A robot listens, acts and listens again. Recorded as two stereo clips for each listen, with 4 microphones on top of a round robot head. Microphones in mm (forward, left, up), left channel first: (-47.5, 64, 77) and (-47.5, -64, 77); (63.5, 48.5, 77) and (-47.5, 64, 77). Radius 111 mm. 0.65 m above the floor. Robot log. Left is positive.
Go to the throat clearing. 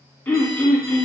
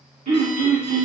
note: The throat clearing: 170° left.
cmd yaw +170
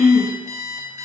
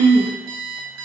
note: The throat clearing is now 15° right.
cmd yaw -15
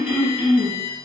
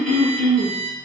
cmd fwd 1.0
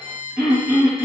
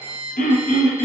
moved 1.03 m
cmd fwd 1.0
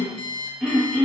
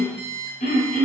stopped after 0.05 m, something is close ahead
note: The throat clearing is now 10° right.
cmd yaw -10
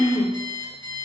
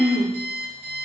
end: Arrived at the throat clearing, straight ahead.